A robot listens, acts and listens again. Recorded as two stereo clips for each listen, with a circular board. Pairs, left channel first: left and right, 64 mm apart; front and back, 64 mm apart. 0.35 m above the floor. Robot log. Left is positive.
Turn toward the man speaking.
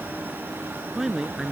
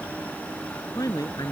end: Found it: a man speaking, straight ahead.